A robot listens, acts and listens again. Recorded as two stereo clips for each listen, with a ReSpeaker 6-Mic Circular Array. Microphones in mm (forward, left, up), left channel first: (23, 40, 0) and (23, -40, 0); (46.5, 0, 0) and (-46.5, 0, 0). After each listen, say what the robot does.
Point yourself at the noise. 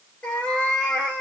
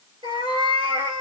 Turn 165° left.
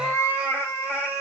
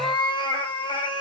Turn 35° left.
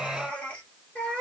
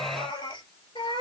Turn 20° left.
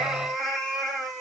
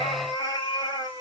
Facing the cat meowing.